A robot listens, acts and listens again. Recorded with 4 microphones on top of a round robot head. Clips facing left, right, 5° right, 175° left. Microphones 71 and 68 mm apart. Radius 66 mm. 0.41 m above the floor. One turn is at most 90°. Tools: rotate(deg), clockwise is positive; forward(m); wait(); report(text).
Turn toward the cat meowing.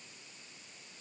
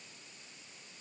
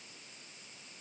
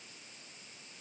wait()
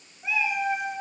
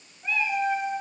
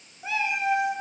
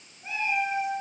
report("Facing the cat meowing, 2 to 4 m away.")